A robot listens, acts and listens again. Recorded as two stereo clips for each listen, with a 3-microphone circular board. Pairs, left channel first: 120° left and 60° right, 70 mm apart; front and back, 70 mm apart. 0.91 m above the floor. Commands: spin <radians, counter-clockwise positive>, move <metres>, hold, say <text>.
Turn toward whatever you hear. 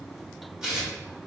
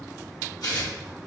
spin 0.26
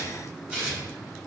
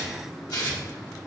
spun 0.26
spin 0.17
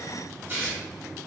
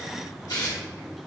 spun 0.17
say Found it: tearing paper, straight ahead.